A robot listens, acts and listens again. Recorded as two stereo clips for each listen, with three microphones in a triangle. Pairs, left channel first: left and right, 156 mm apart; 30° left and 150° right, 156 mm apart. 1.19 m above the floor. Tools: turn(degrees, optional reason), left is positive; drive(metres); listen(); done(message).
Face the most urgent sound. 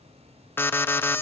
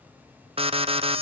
turn(degrees=165, reason="The alarm: 165° left.")
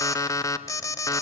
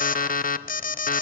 turn(degrees=25, reason="The alarm is now 25° left.")
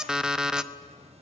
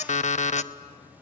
done("Facing the alarm, under 1 m away.")